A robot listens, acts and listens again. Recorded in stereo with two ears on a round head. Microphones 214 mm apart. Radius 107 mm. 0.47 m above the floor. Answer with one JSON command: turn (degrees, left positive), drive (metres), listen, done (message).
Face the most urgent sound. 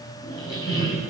{"listen": true}
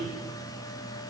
{"listen": true}
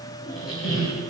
{"done": "I can't make out anything urgent to turn to."}